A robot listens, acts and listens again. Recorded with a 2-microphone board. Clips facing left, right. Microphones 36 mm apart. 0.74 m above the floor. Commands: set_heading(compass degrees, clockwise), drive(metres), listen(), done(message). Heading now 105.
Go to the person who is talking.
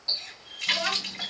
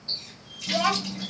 set_heading(195)
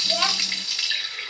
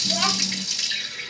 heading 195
set_heading(180)
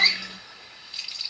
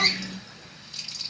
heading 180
drive(1.0)
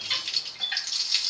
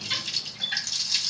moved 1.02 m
listen()
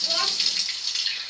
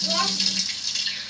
drive(1.0)
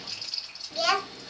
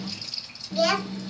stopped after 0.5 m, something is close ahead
done("I am next to the child speaking.")